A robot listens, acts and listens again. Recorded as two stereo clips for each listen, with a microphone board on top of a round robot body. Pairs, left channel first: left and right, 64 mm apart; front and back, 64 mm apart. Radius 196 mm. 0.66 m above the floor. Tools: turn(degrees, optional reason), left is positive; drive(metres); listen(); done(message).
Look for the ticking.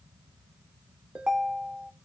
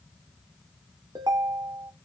listen()
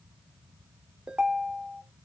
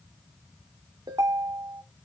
listen()
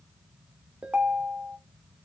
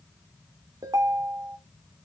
done("I can't make out ticking to turn to.")